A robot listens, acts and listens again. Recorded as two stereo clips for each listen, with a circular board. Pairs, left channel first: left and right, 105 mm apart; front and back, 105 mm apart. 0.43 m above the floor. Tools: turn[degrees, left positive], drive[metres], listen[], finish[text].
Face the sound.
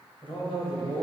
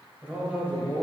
Thought: The man speaking: 100° left.
Action: turn[100]
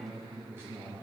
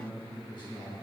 Thought: The man speaking is now 30° right.
Action: turn[-30]
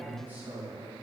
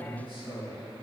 Thought: The man speaking is now 25° right.
Action: turn[-25]
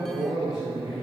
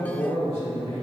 Thought: The man speaking is now 10° right.
Action: turn[-10]
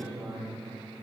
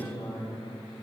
Action: finish[Facing the man speaking.]